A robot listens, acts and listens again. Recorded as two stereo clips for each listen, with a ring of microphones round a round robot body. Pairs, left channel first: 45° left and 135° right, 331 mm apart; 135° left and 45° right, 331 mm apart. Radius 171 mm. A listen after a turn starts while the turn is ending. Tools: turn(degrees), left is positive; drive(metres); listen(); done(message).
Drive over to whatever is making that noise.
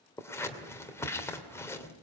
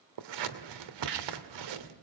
turn(degrees=-40)
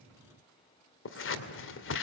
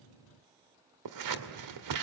turn(degrees=-10)
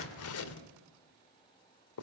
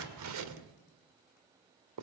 drive(metres=1.0)
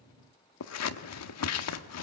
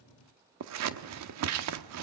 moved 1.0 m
drive(metres=1.0)
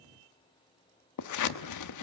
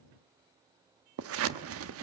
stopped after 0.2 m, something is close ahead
done("Arrived at the scissors, straight ahead.")